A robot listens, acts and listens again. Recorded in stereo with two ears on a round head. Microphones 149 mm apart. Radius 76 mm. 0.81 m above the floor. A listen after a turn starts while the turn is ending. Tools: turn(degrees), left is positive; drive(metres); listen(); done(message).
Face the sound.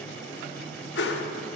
turn(degrees=90)
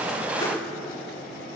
listen()
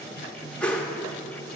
done("Found it: a whoosh, straight ahead.")